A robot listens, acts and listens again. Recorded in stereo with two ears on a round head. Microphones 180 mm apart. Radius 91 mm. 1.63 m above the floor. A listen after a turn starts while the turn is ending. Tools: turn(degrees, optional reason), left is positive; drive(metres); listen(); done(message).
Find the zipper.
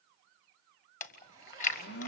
turn(degrees=-15, reason="The zipper: about 15° right or 165° right.")
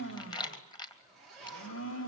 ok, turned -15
done("Found it: a zipper, straight ahead, over 4 m away.")